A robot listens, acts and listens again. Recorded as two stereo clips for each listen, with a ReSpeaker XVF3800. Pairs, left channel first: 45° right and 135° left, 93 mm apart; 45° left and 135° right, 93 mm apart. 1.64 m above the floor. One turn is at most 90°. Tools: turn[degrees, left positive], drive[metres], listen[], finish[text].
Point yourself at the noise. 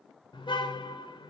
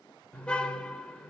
Thought: The car horn: 35° right.
Action: turn[-35]
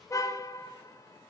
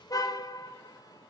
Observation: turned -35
Action: finish[Found it: a car horn, straight ahead.]